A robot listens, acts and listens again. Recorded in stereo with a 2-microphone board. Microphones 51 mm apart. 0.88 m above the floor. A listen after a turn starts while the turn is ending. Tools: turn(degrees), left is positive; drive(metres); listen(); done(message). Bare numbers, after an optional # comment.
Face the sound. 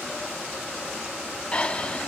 # The breathing: about 25° left or 155° left.
turn(25)
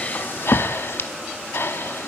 # So it is at 125° left.
turn(125)
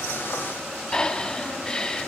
# The breathing is now 15° left.
turn(15)
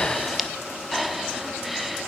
done("Facing the breathing.")